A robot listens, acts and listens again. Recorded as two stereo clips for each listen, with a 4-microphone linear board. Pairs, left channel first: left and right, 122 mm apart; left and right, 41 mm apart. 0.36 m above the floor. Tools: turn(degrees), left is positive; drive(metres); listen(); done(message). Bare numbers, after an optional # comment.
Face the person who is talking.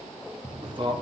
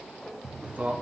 # The man speaking: about 40° right or 140° right.
turn(-40)
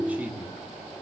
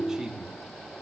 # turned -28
# So it is at 15° right.
turn(-15)
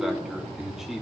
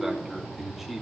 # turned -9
done("Found it: a man speaking, straight ahead, 2 to 4 m away.")